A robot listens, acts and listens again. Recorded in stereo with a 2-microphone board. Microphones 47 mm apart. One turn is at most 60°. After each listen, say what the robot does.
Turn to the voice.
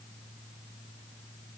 Keep listening.
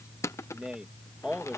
Turn 20° right.
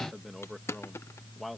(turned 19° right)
Found it: a man speaking, straight ahead.